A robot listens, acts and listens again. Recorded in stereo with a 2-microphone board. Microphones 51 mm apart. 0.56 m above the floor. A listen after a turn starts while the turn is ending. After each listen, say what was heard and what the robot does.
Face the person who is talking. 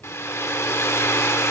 Keep listening.
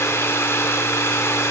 Keep listening.
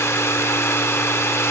I can't make out anyone speaking, only a hair dryer.